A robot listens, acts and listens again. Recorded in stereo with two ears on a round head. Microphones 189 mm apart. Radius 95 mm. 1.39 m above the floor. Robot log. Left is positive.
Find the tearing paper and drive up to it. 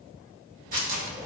note: The tearing paper: about 40° right or 140° right.
cmd yaw -40
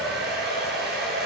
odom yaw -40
cmd idle
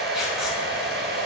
cmd idle
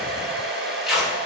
cmd fwd 1.0
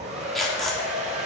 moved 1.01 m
cmd fwd 1.0
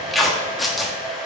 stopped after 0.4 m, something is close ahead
end: I am next to the tearing paper.